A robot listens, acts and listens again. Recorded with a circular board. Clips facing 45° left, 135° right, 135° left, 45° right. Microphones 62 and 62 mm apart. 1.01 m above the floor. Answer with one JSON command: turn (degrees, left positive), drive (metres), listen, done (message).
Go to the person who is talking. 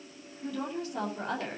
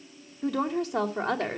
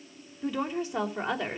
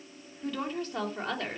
{"turn": -145}
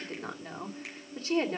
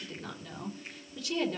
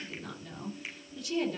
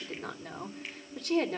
{"turn": -10}
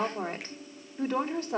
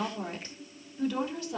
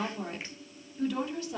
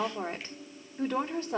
{"drive": 1.0}
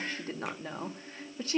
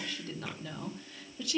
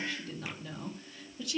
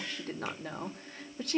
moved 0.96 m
{"drive": 1.0}
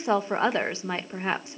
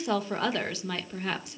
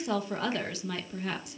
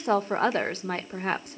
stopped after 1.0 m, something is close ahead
{"turn": -10}
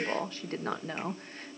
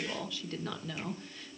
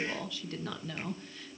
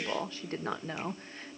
{"done": "Arrived at the woman speaking, straight ahead."}